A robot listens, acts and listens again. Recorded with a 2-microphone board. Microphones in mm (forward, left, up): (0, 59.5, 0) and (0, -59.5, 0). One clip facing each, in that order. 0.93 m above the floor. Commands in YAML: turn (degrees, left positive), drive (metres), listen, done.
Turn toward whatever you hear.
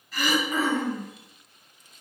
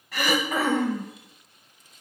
turn: -75
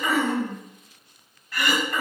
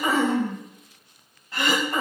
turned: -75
turn: -25
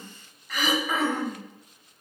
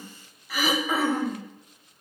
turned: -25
done: "Facing the throat clearing, 1 to 2 m away."